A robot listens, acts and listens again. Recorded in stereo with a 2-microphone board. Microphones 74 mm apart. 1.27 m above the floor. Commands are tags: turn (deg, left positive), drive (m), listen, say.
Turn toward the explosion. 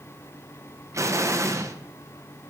<turn deg="-45"/>
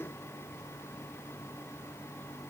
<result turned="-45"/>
<listen/>
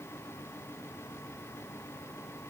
<say>I heard an explosion, but can't make it out now. It was about straight ahead or 90° right.</say>